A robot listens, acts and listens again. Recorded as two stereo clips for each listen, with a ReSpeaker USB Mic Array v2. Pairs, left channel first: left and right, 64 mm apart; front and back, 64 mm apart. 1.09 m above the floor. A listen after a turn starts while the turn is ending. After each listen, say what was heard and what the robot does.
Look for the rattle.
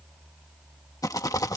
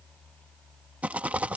The rattle: 110° left. Turn 110° left.
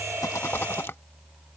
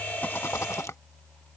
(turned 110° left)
The rattle is now 40° left. Turn 40° left.
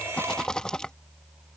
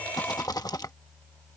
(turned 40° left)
The rattle is now 10° left. Turn 10° left.
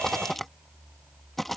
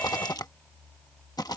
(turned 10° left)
Facing the rattle.